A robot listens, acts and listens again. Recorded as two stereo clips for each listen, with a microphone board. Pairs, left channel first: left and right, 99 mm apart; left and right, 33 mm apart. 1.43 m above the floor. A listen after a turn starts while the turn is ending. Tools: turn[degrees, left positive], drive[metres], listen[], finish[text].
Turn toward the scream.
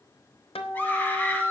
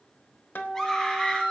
Thought: The scream: about 15° left or 165° left.
Action: turn[15]
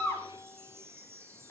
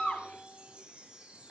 Action: listen[]
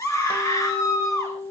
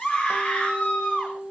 Thought: So it is at 150° left.
Action: turn[150]
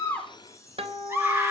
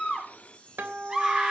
Thought: The scream is now 20° right.
Action: turn[-20]
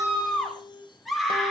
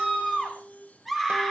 Action: finish[Found it: a scream, straight ahead, over 4 m away.]